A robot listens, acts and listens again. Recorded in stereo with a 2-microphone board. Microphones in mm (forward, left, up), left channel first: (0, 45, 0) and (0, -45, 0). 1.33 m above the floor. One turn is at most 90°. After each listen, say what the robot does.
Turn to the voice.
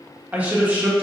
Turn 20° right.
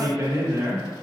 Turn 90° right.
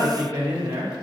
Turn 50° right.
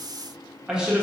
Turn 10° right.
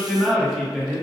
Facing the man speaking, 1 to 2 m away.